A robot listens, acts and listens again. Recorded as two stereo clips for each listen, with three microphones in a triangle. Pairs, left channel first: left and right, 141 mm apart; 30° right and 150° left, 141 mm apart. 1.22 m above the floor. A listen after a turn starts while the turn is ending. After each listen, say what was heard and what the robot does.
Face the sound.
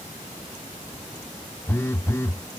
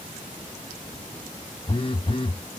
The phone buzzing: 20° left. Turn 20° left.
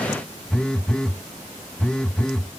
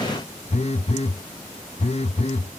Facing the phone buzzing.